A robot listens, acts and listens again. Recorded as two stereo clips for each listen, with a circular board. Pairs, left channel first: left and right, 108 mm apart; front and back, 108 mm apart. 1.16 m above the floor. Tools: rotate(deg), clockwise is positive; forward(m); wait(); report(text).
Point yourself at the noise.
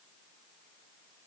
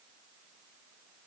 wait()
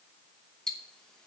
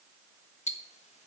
report("Found it: ticking, straight ahead.")